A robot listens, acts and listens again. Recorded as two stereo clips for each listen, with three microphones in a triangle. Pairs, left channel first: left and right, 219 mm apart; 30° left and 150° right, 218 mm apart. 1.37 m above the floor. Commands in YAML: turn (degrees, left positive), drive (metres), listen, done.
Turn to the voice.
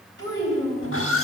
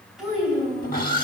turn: -60
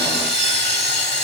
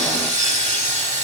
listen: true
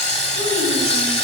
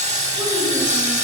listen: true
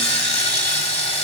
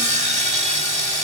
done: "Facing where the child speaking came from. I can't hear it now."